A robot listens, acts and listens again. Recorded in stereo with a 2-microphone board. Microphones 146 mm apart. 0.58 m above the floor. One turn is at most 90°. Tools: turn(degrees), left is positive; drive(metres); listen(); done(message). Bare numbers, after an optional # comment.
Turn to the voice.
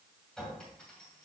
listen()
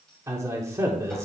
# The man speaking: about 20° right or 160° right.
turn(-20)
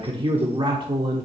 # So it is at 135° right.
turn(-90)
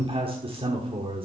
# The man speaking is now 50° right.
turn(-50)
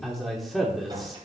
done("Facing the man speaking.")